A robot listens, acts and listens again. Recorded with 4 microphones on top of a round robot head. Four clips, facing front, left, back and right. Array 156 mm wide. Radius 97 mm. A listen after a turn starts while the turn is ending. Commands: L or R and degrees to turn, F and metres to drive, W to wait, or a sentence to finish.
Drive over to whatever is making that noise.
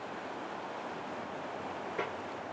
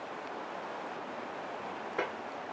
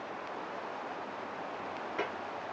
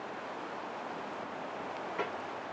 L105
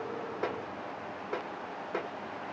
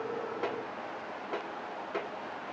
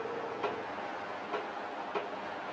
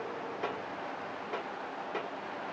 L30
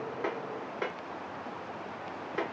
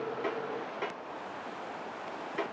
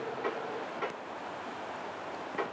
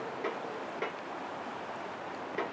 L10
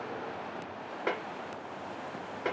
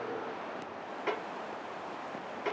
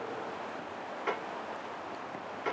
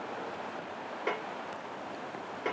F1.0
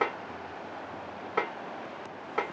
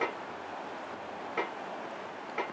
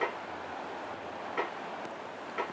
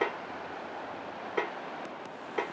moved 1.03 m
R10
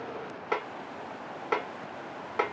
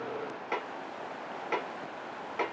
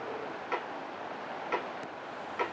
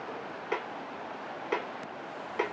F1.0
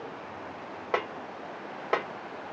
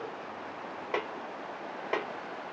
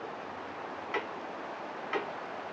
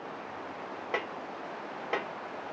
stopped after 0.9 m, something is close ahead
I am next to the snare drum.